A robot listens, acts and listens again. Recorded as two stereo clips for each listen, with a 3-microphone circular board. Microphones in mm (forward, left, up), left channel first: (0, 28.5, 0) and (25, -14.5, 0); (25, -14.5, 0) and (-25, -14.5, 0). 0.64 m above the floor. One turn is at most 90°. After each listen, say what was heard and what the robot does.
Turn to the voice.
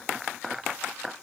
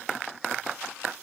Keep listening.
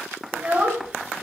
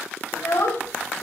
Found it: a child speaking, straight ahead, 2 to 4 m away.